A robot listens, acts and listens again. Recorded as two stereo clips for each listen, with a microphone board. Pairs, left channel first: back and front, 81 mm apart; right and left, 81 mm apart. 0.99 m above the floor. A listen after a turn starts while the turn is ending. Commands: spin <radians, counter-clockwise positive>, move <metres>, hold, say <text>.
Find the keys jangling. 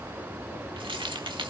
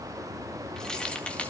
spin -0.26
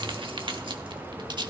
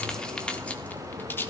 spin -0.44
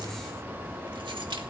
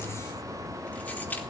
spin -0.35
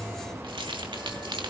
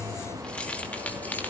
spin -0.35
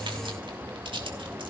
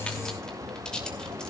spin -0.17
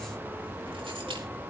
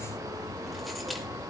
hold
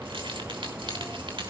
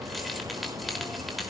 say Facing the keys jangling.